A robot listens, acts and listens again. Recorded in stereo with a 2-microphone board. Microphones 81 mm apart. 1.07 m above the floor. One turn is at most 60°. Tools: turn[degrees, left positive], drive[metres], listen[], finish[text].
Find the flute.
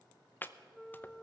Action: turn[30]
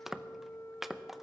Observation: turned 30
Thought: So it is at 145° left.
Action: turn[60]
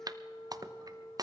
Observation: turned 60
Thought: The flute is now 90° left.
Action: turn[60]
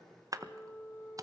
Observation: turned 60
Thought: The flute is now 20° left.
Action: turn[20]
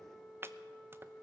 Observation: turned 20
Action: finish[Facing the flute.]